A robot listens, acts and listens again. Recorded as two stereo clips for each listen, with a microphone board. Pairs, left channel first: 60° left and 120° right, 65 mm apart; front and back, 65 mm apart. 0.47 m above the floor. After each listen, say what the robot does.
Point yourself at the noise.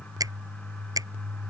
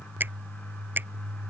Turn 120° right.
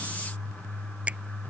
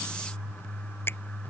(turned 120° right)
Keep listening.
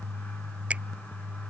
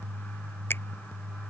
Keep listening.
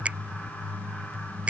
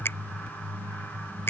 Turn 50° right.
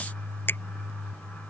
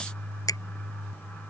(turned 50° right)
Turn 10° left.
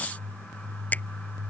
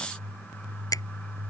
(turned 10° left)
Found it: a finger snap, straight ahead.